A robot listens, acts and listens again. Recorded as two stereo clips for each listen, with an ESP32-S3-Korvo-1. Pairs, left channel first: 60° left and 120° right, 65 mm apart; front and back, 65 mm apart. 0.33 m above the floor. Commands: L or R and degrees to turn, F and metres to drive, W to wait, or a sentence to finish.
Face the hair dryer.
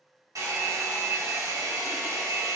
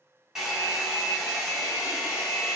R100
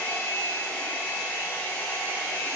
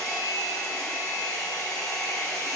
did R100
Facing the hair dryer, 1 to 2 m away.